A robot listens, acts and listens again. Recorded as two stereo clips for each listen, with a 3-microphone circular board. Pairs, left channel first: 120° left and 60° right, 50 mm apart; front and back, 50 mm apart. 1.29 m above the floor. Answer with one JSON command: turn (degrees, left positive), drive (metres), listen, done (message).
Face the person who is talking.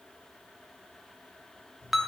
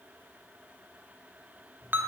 {"listen": true}
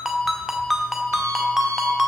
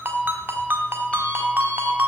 {"listen": true}
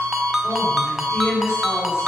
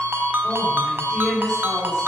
{"turn": 100}
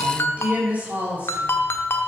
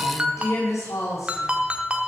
{"done": "Found it: a woman speaking, straight ahead, over 4 m away."}